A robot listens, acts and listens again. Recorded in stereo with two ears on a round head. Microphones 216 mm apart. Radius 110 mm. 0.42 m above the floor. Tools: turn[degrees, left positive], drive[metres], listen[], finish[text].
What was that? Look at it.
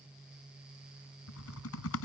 Thought: The typing on a keyboard: about 65° left or 115° left.
Action: turn[65]
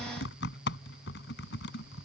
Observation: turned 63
Thought: So it is at 50° left.
Action: turn[50]
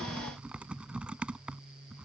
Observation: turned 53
Action: finish[Found it: typing on a keyboard, straight ahead.]